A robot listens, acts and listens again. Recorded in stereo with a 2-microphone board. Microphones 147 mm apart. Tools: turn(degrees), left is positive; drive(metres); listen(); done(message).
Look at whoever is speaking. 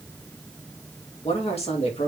turn(degrees=45)
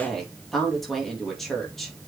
done("Found it: a woman speaking, straight ahead.")